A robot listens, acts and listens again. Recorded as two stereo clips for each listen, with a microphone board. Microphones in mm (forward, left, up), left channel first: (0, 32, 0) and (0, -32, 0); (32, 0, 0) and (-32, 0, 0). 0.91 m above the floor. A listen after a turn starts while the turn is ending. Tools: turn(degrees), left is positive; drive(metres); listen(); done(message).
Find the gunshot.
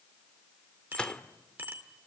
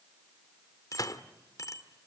turn(degrees=15)
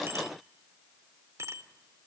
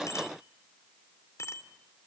done("Facing where the gunshot came from. I can't hear it now.")